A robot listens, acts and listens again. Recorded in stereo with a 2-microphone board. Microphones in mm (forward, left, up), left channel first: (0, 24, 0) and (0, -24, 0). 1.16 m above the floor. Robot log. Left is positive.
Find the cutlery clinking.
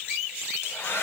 cmd idle
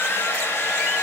cmd idle
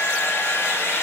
end: I can't make out cutlery clinking, only a hair dryer.